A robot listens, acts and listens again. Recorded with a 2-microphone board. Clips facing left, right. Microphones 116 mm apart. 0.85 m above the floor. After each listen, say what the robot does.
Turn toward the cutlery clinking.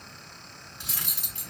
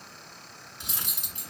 Turn 20° right.
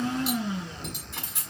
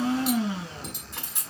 Facing the cutlery clinking.